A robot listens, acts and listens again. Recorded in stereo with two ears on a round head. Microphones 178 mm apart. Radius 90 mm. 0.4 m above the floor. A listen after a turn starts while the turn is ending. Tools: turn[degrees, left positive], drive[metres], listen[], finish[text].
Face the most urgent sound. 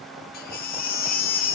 Thought: The baby crying: about 45° left or 135° left.
Action: turn[45]
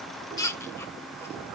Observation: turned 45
Action: listen[]
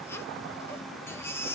Thought: So it is at 15° left.
Action: turn[15]
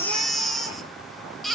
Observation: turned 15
Action: finish[Found it: a baby crying, straight ahead.]